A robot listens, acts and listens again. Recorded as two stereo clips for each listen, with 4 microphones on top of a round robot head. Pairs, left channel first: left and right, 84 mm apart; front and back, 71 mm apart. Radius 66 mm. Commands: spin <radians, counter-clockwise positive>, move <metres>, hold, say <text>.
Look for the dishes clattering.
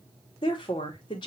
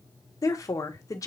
hold
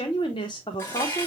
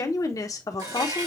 spin 2.62
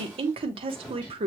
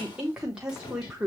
spin 0.26
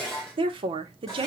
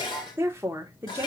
say Facing the dishes clattering, 1 to 2 m away.